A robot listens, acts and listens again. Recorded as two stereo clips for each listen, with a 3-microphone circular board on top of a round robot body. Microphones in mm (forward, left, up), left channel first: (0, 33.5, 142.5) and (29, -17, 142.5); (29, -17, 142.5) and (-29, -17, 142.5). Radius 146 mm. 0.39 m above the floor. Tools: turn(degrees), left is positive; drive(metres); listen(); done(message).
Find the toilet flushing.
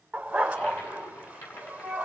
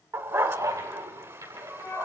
turn(degrees=160)
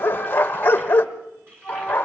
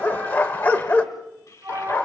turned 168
turn(degrees=-10)
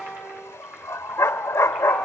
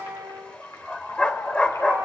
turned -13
listen()
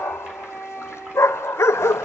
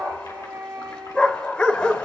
listen()
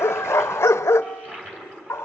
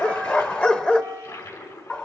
done("Found it: a toilet flushing, straight ahead.")